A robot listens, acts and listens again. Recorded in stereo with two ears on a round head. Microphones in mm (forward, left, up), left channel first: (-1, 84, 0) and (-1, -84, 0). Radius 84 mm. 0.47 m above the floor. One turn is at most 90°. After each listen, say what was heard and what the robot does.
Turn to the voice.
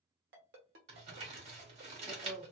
Turn 30° right.
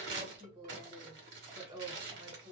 So it is at 145° right. Turn 90° right.
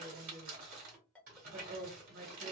The woman speaking is now 80° right. Turn 80° right.
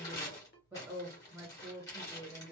The woman speaking is now 10° right. Turn 10° right.
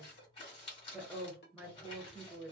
Facing the woman speaking, 1 to 2 m away.